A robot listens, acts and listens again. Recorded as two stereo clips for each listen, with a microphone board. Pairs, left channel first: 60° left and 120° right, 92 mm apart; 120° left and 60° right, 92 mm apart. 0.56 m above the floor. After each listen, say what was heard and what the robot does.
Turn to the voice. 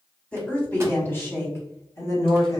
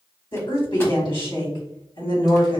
The woman speaking: 105° left. Turn 105° left.
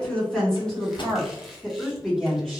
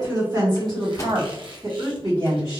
The woman speaking is now 30° right. Turn 30° right.
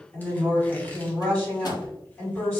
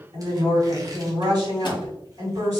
The woman speaking is now 10° right. Turn 10° right.
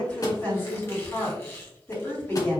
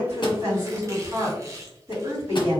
Found it: a woman speaking, straight ahead, 2 to 4 m away.